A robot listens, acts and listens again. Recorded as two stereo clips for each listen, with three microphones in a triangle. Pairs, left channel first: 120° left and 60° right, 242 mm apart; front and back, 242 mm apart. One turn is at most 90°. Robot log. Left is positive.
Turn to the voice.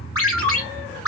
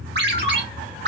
cmd idle
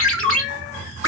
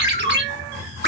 cmd idle
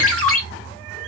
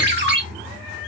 end: I can't make out anyone speaking to turn to.